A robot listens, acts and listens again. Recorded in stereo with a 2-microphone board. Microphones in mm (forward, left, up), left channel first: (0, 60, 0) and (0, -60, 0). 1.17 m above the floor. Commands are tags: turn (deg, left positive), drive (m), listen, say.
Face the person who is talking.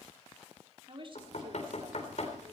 <turn deg="-40"/>
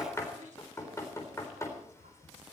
<turn deg="-105"/>
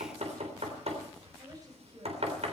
<turn deg="-30"/>
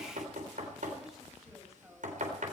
<listen/>
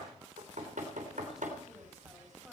<listen/>
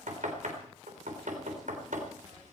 <say>Facing where the woman speaking came from. I can't hear it now.</say>